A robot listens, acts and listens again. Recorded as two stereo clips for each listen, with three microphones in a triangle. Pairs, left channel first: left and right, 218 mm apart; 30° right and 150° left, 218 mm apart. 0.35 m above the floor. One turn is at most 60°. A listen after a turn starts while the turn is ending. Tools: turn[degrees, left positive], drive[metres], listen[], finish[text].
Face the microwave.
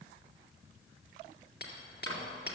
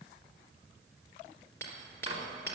Thought: The microwave: 90° left.
Action: turn[60]
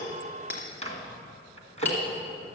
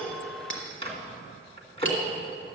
Thought: The microwave is now 30° left.
Action: turn[30]
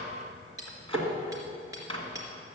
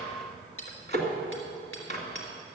Thought: The microwave is now 25° left.
Action: turn[25]
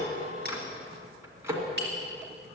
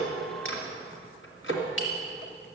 Thought: The microwave is now 10° right.
Action: turn[-10]
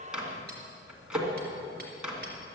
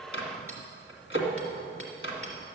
Action: finish[Facing the microwave.]